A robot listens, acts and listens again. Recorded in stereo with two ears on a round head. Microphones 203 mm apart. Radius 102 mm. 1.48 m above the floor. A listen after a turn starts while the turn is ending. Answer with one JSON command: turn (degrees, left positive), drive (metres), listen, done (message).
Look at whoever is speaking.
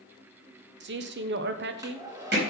{"turn": -50}
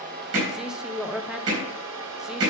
{"done": "Found it: a man speaking, straight ahead."}